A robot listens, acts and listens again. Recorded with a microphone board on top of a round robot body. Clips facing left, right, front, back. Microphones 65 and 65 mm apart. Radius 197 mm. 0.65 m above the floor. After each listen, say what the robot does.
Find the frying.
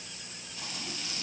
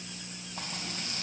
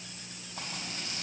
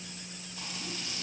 Turn 40° right.
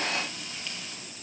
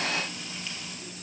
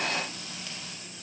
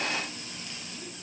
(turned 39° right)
Found it: frying, straight ahead.